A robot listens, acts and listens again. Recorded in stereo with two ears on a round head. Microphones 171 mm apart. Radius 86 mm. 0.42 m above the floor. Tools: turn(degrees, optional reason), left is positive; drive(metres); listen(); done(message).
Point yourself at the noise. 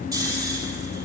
turn(degrees=-20, reason="The snoring: about 20° right or 160° right.")
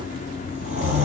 turn(degrees=-140, reason="So it is at 140° right.")
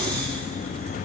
listen()
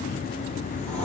done("Facing the snoring.")